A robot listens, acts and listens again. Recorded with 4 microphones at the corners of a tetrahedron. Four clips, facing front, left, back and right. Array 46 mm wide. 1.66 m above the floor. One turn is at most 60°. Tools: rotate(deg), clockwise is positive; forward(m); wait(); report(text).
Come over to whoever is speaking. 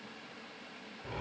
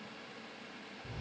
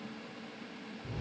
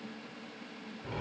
wait()
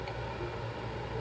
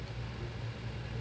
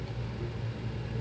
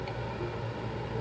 wait()
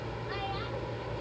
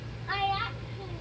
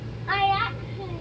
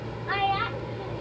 rotate(60)
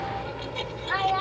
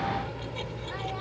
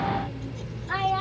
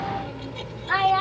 rotate(60)
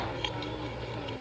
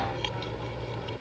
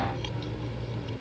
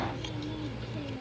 rotate(30)
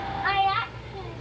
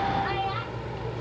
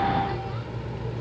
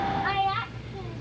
forward(1.0)
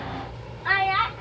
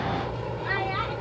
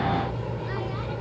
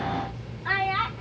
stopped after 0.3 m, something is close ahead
report("Something is in my way. I am facing the child speaking but have not reached it.")